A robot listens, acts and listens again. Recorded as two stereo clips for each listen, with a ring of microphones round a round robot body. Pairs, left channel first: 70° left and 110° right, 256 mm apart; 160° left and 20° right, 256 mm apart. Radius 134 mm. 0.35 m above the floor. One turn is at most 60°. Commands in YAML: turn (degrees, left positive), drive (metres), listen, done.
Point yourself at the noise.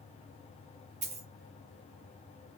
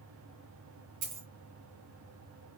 turn: -50
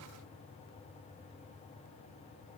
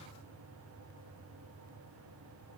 done: "I heard a dropped coin from this way, but can't make it out now."